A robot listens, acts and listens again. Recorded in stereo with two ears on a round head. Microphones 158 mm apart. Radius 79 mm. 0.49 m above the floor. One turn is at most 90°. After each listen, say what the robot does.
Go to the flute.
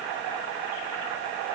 Keep listening.
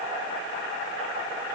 Keep listening.
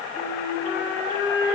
Turn 30° left.
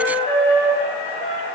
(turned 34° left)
Turn 90° left.
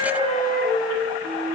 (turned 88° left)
Turn 30° left.
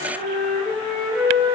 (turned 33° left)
Drive 1.0 m forward.
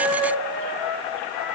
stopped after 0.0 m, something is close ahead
Blocked. The flute is further on, straight ahead.